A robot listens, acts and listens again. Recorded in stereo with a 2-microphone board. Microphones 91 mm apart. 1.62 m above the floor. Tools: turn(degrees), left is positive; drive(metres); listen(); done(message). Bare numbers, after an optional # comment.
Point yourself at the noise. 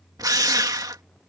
# The drill: about 45° right or 135° right.
turn(-45)
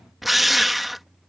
done("Found it: a drill, straight ahead.")